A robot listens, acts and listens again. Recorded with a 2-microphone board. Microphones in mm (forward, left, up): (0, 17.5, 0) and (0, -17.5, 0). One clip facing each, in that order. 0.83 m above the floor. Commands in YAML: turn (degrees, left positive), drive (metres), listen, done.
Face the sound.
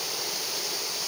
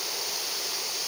listen: true
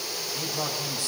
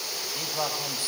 turn: -25
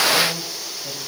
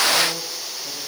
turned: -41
listen: true
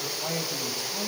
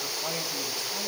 done: "Found it: a man speaking, straight ahead, over 4 m away."